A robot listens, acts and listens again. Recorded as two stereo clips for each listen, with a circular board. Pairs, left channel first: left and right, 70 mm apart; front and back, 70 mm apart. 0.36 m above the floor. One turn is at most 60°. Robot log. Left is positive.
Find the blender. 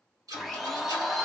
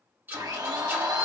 note: The blender: straight behind.
cmd yaw +60
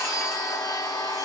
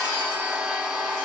note: The blender is now 105° left.
cmd yaw +60
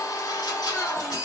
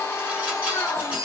note: The blender is now 45° left.
cmd yaw +45
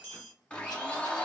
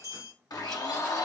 note: The blender is now 15° left.
cmd yaw +15
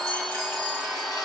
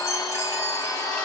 end: Found it: a blender, straight ahead, under 1 m away.